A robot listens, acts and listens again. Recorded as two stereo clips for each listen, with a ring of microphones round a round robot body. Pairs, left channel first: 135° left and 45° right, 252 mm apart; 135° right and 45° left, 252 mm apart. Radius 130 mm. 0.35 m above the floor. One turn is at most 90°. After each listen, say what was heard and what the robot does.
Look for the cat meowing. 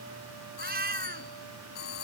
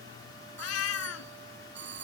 The cat meowing: 100° right. Turn 90° right.
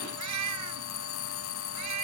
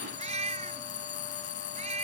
The cat meowing is now 20° right. Turn 20° right.
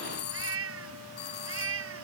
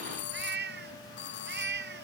Facing the cat meowing.